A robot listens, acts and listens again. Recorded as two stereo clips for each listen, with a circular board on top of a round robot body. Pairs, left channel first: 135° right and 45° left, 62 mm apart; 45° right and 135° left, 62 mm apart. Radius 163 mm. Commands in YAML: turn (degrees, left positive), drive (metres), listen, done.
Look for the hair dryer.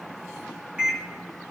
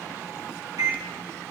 listen: true
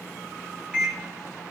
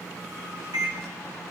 listen: true
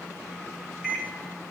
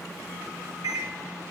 done: "I can't make out a hair dryer to turn to."